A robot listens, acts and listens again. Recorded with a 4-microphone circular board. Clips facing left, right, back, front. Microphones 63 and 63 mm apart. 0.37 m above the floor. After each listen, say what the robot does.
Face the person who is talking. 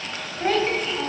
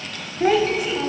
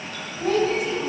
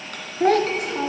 Turn 10° right.
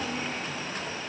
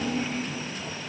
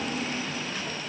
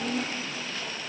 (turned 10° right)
Facing the child speaking.